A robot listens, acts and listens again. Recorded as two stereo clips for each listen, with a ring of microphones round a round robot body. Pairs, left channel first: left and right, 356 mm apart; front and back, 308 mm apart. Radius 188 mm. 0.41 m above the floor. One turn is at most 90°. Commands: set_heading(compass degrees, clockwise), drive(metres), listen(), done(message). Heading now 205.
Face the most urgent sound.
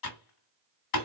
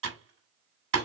listen()
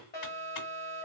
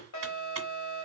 set_heading(180)
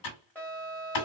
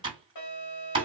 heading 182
done("Facing the alarm.")